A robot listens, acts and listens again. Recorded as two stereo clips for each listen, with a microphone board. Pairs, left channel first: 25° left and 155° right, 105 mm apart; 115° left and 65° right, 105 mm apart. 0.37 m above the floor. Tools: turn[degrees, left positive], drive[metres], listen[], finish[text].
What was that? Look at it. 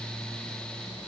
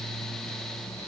Action: listen[]
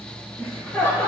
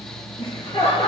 Thought: The laughter: 90° left.
Action: turn[90]
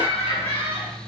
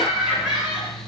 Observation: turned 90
Thought: The laughter is now 15° left.
Action: turn[15]
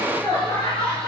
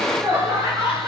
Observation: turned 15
Thought: The laughter is now 10° right.
Action: turn[-10]
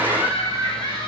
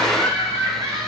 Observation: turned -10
Thought: The laughter is now 10° right.
Action: turn[-10]
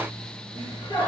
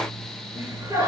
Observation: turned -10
Action: finish[Facing the laughter, over 4 m away.]